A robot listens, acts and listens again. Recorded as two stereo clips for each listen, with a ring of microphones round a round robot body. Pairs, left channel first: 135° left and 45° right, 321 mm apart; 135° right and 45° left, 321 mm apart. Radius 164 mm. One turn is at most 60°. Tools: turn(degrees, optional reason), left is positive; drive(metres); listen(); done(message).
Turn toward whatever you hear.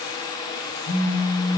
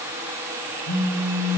turn(degrees=-60, reason="The phone buzzing: 165° right.")
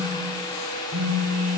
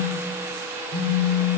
turn(degrees=-60, reason="The phone buzzing is now 95° right.")
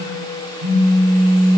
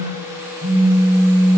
turn(degrees=-20, reason="The phone buzzing is now 20° right.")
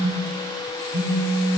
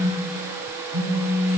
done("Found it: a phone buzzing, straight ahead, under 1 m away.")